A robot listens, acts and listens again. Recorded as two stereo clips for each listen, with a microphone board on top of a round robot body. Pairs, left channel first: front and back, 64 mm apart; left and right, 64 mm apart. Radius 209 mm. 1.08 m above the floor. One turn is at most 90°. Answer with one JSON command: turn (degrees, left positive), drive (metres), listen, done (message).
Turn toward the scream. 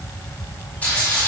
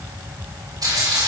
{"listen": true}
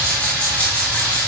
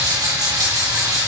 {"listen": true}
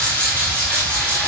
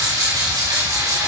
{"done": "I can't make out a scream to turn to."}